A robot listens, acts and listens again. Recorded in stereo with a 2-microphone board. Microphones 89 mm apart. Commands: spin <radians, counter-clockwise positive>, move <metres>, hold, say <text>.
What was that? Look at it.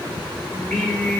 spin 0.26
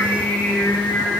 spin 0.44
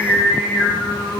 spin 0.44
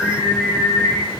spin 0.52
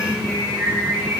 spin -0.26
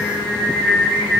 say Facing the singing.